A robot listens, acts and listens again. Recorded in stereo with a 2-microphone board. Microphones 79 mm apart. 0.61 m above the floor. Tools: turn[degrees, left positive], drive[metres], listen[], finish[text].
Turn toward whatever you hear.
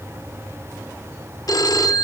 Thought: The phone ringing: about 60° left or 120° left.
Action: turn[60]
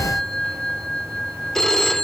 Action: finish[Found it: a phone ringing, straight ahead, under 1 m away.]